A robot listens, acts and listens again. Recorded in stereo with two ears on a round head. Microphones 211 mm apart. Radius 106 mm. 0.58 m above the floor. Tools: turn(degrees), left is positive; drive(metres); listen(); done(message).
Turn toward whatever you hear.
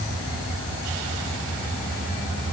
listen()
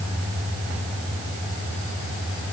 listen()
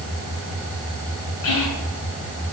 turn(degrees=70)
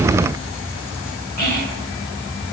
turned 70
turn(degrees=40)
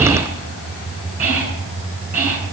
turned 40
turn(degrees=-10)
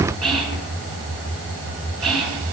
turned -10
done("Found it: whispering, straight ahead, over 4 m away.")